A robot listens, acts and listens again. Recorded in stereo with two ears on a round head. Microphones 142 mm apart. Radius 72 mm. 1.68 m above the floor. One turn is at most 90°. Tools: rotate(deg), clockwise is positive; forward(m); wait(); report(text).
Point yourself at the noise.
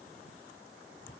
wait()
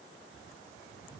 wait()
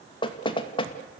rotate(-35)
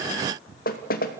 rotate(-90)
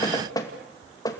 rotate(-25)
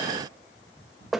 report("Facing the knocking.")